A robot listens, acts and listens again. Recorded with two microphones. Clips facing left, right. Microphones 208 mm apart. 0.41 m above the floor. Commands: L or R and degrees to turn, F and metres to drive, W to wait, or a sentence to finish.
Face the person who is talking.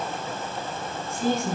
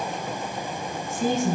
R50
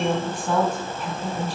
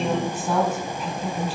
Found it: a woman speaking, straight ahead, 2 to 4 m away.